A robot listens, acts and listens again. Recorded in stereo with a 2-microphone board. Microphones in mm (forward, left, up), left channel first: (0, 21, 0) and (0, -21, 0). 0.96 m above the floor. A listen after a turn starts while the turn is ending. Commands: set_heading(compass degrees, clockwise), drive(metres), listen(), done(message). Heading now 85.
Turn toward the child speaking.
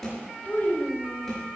set_heading(45)
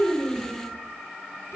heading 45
listen()
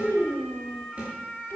set_heading(300)
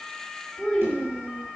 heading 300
set_heading(285)
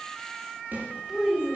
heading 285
done("Found it: a child speaking, straight ahead.")